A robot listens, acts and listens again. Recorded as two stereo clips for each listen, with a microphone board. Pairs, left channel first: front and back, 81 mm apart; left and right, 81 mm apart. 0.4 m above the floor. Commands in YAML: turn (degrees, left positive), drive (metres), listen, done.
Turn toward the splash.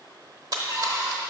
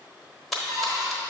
turn: 175
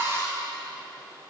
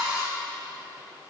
done: "I heard a splash from this way, but can't make it out now."